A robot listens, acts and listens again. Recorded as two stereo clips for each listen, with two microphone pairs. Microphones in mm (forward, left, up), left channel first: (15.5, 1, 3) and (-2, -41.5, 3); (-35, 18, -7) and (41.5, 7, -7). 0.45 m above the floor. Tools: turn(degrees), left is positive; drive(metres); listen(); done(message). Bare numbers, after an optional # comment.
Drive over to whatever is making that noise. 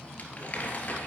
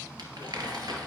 # The crumpling: 10° left.
turn(10)
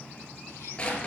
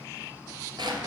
drive(1.0)
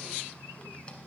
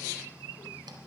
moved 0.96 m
listen()
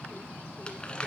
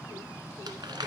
drive(1.0)
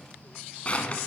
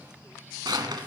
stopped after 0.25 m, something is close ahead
done("Arrived at the crumpling, straight ahead.")